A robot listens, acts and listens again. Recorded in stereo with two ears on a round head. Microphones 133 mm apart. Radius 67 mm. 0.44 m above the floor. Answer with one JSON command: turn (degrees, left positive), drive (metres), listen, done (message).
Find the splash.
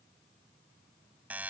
{"listen": true}
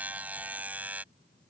{"listen": true}
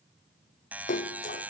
{"turn": 60}
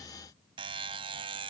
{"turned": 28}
{"listen": true}
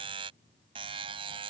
{"done": "I heard a splash, but can't make it out now. It was about 30° left or 95° left."}